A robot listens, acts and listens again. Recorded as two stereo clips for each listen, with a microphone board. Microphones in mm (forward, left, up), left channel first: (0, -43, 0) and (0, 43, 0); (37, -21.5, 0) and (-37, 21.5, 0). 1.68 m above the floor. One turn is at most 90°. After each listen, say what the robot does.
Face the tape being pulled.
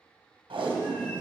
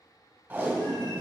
Turn 75° left.
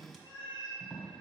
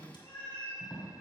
Facing the tape being pulled.